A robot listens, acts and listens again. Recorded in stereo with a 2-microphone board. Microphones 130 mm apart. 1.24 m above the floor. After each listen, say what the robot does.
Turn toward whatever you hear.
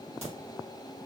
Turn 55° right.
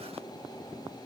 Keep listening.
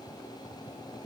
I heard a crack, but can't make it out now. It was about straight ahead or 70° right.